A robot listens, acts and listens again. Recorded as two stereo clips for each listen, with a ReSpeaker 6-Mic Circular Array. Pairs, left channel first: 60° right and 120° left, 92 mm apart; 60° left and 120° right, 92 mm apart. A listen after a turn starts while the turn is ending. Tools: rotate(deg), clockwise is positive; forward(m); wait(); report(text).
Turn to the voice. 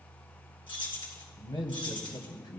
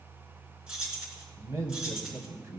rotate(75)
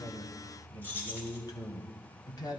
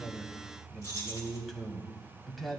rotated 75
rotate(30)
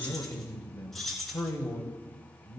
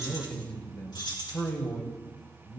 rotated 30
rotate(10)
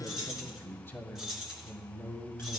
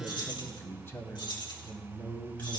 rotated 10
report("Found it: a man speaking, straight ahead.")